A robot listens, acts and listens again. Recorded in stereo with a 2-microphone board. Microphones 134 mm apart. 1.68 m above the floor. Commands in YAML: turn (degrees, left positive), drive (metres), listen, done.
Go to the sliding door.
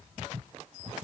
listen: true
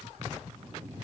listen: true
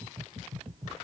done: "I can't make out a sliding door to turn to."